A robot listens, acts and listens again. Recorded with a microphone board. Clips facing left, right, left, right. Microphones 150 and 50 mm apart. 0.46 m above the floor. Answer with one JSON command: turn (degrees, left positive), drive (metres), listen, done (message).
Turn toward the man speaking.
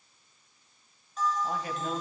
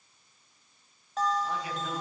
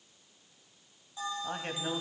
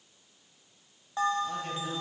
{"turn": 45}
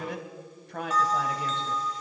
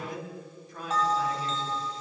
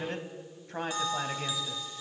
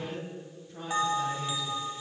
{"turn": 90}
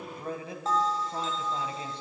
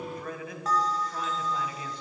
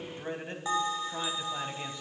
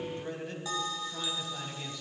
{"turn": 30}
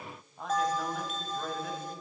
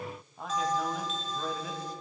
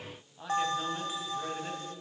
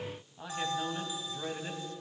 {"done": "Facing the man speaking."}